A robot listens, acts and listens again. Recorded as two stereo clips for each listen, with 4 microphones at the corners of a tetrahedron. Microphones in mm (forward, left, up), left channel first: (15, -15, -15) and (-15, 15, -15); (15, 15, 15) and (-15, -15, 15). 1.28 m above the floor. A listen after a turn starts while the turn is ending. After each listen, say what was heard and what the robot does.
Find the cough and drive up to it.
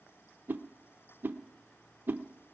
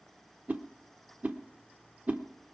Keep listening.
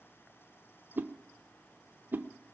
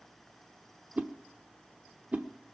Keep listening.
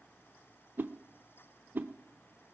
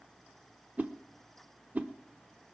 I can't make out a cough to turn to.